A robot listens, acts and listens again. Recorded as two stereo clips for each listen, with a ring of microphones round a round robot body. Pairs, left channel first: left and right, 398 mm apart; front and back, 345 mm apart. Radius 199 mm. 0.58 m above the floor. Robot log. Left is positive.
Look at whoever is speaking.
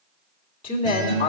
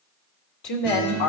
note: The woman speaking: 25° left.
cmd yaw +25
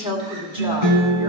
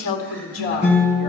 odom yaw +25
note: The woman speaking is now 15° right.
cmd yaw -15
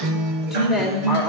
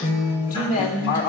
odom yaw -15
end: Found it: a woman speaking, straight ahead, 2 to 4 m away.